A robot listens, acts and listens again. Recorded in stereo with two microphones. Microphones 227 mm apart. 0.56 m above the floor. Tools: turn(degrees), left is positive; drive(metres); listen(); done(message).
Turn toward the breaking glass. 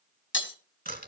turn(degrees=55)
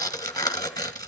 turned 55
listen()
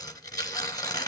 done("I heard breaking glass, but can't make it out now. It was about straight ahead or 70° left.")